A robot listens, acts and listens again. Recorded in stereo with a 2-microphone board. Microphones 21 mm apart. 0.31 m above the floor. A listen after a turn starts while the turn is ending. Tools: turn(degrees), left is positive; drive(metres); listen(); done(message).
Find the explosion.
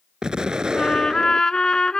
turn(degrees=-40)
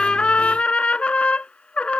listen()
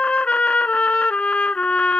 done("I heard an explosion, but can't make it out now. It was about straight ahead or 100° right.")